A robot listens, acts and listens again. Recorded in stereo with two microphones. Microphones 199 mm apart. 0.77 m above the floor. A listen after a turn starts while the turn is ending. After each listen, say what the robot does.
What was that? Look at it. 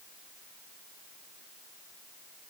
Keep listening.
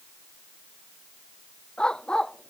Turn 30° left.
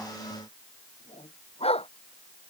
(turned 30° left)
Turn 150° left.
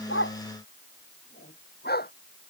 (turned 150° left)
Turn 55° left.
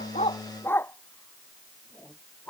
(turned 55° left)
Turn 10° left.
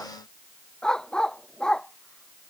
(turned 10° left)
Found it: a dog barking, straight ahead.